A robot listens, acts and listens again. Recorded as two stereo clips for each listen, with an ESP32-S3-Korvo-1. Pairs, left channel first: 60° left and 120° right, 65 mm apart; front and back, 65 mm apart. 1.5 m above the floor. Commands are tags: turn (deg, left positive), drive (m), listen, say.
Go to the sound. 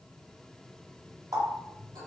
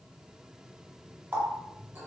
<turn deg="-125"/>
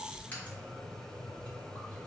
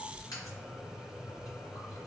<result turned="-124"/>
<drive m="1.0"/>
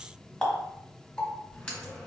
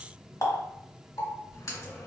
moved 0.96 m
<turn deg="-15"/>
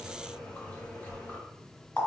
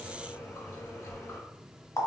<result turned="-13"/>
<drive m="1.0"/>
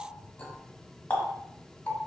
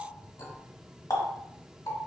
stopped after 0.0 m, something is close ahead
<say>Arrived at the running tap, straight ahead.</say>